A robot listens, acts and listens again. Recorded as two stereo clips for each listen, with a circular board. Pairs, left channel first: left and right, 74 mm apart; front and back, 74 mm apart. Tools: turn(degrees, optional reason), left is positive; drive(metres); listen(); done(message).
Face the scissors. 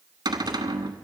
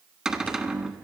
listen()
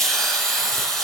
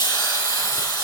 listen()
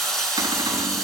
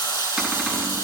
done("I can't make out scissors, only a cupboard door and a hiss.")